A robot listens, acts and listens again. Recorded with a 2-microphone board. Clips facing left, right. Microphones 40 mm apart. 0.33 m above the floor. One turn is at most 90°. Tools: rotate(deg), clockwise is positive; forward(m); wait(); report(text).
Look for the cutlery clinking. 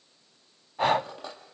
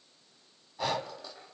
rotate(-65)
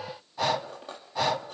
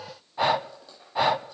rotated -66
rotate(-50)
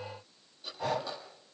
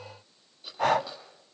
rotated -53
report("Found it: cutlery clinking, straight ahead, over 4 m away.")